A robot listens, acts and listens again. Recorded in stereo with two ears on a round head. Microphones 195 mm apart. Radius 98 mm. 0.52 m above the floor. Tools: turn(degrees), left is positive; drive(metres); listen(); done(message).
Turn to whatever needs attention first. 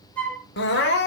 turn(degrees=50)
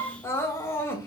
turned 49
turn(degrees=15)
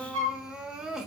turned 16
done("Facing the crying.")